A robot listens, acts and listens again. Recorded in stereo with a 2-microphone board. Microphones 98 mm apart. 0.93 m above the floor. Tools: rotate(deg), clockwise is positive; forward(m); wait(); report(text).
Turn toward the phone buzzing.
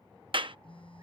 rotate(-65)
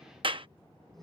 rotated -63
report("Found it: a phone buzzing, straight ahead.")